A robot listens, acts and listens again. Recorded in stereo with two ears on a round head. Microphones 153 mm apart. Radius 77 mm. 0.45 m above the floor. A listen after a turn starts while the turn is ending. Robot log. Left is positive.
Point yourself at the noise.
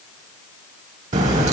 note: The crack: about 45° right or 135° right.
cmd yaw -45
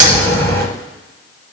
note: So it is at 80° right.
cmd yaw -80
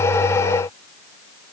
end: I heard a crack from this way, but can't make it out now.